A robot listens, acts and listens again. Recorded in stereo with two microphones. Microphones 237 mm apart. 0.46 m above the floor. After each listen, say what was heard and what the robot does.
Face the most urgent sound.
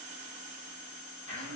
Keep listening.
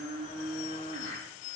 Keep listening.
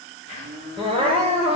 The crying: about 25° right or 155° right. Turn 25° right.
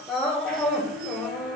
Facing the crying.